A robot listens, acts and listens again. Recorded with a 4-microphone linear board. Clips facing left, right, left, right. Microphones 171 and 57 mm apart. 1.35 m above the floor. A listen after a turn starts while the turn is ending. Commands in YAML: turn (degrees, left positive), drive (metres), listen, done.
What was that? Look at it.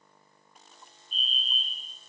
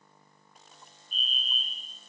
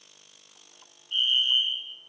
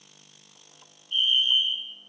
turn: 45
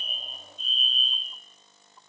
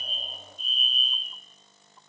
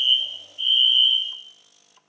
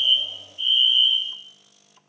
done: "Found it: a fire alarm, straight ahead, over 4 m away."